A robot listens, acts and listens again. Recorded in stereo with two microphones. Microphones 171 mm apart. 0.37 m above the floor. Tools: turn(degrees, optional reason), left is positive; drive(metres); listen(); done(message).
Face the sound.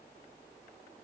listen()
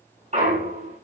turn(degrees=-45, reason="The clunk: about 45° right or 135° right.")
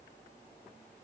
listen()
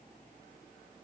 done("I heard a clunk, but can't make it out now. It was about straight ahead or 90° right.")